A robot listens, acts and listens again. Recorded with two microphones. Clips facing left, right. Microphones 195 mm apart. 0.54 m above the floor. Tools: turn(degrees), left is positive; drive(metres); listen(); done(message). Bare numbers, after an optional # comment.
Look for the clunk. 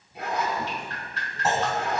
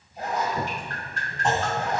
turn(30)
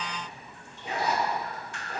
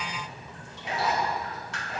listen()
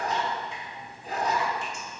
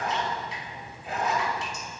done("I heard a clunk, but can't make it out now. It was about 25° right or 145° left.")